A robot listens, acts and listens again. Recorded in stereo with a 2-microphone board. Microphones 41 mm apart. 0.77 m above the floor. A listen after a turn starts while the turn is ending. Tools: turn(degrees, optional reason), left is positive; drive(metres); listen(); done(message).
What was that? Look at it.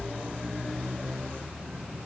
listen()
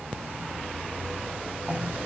turn(degrees=-40, reason="The cough: about 40° right or 140° right.")
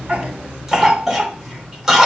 turn(degrees=-10, reason="So it is at 10° right.")
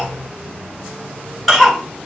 done("Found it: a cough, straight ahead, 2 to 4 m away.")